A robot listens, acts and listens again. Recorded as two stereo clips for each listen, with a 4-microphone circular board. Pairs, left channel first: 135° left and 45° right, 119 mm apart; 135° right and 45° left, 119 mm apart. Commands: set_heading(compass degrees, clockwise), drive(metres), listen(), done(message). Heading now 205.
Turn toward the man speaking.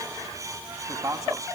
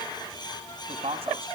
set_heading(190)
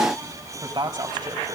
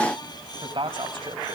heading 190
done("Facing the man speaking, 2 to 4 m away.")